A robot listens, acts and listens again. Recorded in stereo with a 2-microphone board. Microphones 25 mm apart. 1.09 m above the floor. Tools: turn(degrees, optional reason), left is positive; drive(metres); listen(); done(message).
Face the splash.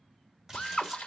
turn(degrees=-15, reason="The splash: about 15° right or 165° right.")
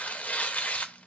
listen()
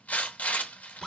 done("I heard a splash, but can't make it out now. It was about straight ahead or 150° right.")